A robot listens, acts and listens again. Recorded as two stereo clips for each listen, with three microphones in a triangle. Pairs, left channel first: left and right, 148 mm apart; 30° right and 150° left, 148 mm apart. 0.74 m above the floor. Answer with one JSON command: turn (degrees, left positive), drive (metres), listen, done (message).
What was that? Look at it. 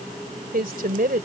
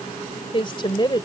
{"turn": -90}
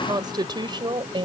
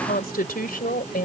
{"turn": -35}
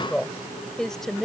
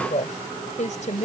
{"done": "Found it: a woman speaking, straight ahead."}